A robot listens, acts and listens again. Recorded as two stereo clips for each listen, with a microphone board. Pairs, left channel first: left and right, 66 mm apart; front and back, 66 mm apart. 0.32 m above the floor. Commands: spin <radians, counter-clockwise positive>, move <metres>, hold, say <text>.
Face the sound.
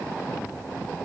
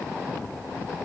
hold
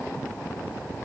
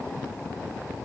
hold
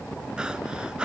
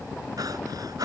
spin -2.88
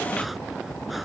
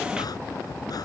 hold
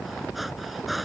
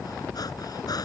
say Facing the breathing.